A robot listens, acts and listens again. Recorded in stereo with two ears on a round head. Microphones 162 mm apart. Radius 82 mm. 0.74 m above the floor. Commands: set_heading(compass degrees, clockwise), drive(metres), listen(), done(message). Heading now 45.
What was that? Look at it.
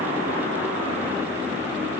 listen()
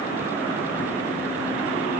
listen()
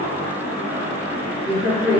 set_heading(15)
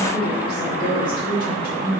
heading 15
set_heading(225)
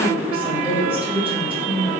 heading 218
set_heading(228)
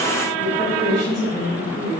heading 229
done("Facing the woman speaking.")